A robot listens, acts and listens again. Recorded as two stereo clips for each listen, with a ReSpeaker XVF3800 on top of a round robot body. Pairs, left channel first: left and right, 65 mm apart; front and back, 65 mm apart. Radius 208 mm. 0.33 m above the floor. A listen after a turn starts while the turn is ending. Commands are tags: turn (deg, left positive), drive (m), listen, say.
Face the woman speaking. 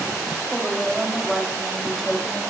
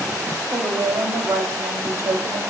<turn deg="180"/>
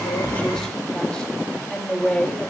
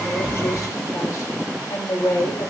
<turn deg="20"/>
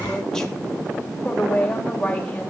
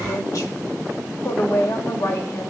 <turn deg="25"/>
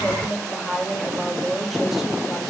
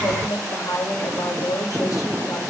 <say>Facing the woman speaking.</say>